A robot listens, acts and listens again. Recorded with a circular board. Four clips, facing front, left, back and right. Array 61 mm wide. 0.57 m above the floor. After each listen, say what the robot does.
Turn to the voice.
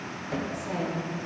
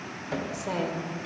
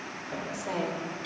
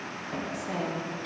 Turn 110° left.
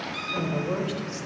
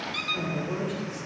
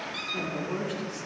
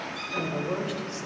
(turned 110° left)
Turn 30° right.
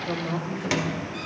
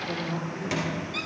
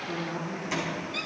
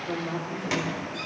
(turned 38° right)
Found it: a woman speaking, straight ahead, 2 to 4 m away.